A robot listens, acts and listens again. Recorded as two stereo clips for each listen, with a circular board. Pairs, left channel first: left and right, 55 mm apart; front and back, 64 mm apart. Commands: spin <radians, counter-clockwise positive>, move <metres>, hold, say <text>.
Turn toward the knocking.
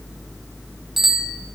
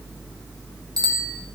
hold
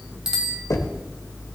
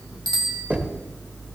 spin 2.01
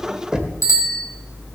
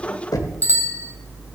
spin -0.26
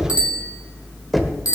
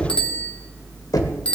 say Facing the knocking.